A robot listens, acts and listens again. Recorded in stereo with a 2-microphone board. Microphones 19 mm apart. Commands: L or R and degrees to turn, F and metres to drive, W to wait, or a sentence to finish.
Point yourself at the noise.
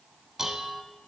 R20
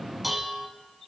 Found it: dishes clattering, straight ahead.